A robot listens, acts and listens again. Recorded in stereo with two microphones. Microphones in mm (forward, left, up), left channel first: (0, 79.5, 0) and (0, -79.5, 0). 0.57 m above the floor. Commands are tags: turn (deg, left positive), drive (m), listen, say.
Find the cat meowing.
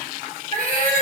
<turn deg="-65"/>
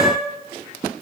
<turn deg="-20"/>
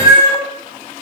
<turn deg="-30"/>
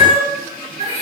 <turn deg="-45"/>
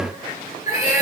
<turn deg="-20"/>
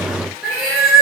<say>Found it: a cat meowing, straight ahead, 1 to 2 m away.</say>